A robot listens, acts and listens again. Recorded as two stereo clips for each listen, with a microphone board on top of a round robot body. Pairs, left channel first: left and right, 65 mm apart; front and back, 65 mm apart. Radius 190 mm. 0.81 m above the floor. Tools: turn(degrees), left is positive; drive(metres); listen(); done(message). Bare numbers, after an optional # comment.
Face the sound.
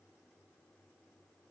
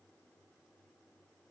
listen()
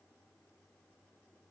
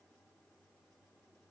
listen()
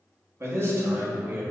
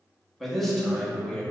# The man speaking: 65° right.
turn(-65)
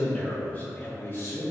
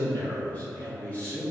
# The man speaking is now 65° left.
turn(65)
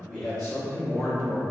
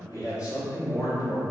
# The man speaking is now 15° left.
turn(15)
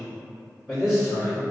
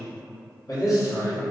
done("Found it: a man speaking, straight ahead, 1 to 2 m away.")